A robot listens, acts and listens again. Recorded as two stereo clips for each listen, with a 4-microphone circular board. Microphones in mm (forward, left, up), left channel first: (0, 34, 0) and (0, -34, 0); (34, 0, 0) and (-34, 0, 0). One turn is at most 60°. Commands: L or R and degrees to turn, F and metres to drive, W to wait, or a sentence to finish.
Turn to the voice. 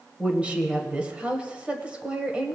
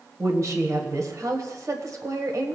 R60
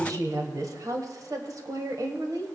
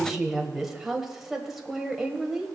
R60
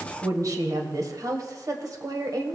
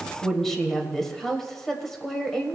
R60
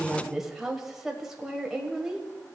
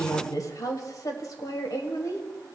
R10
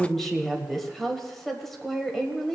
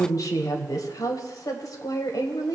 Found it: a woman speaking, straight ahead.